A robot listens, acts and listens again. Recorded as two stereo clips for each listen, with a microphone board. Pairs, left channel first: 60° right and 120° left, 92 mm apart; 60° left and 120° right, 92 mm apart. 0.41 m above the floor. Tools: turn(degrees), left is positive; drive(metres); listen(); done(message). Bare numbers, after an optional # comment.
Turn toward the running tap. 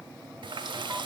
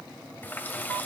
# The running tap: 125° left.
turn(125)
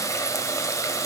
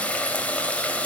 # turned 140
# The running tap is now 15° right.
turn(-15)
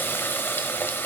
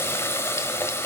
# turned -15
done("Found it: a running tap, straight ahead.")